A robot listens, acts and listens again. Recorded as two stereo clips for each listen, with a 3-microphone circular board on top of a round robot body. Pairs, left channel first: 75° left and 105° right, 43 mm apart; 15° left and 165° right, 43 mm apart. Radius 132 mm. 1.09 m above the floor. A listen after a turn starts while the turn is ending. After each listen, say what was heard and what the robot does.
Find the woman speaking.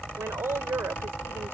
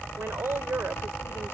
The woman speaking: 130° right. Turn 130° right.
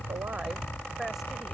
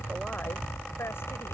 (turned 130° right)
Keep listening.
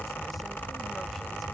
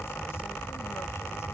Keep listening.
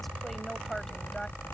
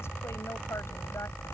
Facing where the woman speaking came from. I can't hear it now.